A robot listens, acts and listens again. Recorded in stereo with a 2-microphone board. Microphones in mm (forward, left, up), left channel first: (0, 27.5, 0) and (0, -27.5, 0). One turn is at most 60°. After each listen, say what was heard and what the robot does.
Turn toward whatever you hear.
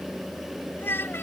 The child speaking: about 40° left or 140° left. Turn 40° left.
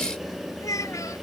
So it is at 100° left. Turn 60° left.
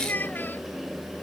The child speaking is now 35° left. Turn 35° left.
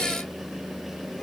Keep listening.
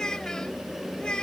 The child speaking is now 15° left. Turn 15° left.
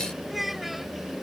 Found it: a child speaking, straight ahead.